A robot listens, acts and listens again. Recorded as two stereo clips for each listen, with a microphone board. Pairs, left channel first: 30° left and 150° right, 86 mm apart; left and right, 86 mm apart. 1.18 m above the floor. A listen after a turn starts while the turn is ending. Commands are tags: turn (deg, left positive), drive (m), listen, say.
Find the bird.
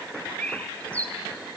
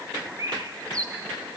<turn deg="-40"/>
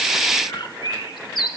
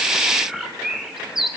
<say>Facing the bird.</say>